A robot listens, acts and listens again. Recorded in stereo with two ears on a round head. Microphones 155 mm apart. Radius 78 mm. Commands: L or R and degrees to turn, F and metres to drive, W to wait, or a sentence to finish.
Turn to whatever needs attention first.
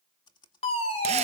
L35
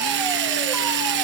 W
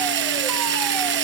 W
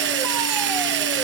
I heard a fire alarm, but can't make it out now. It was about straight ahead or 110° left.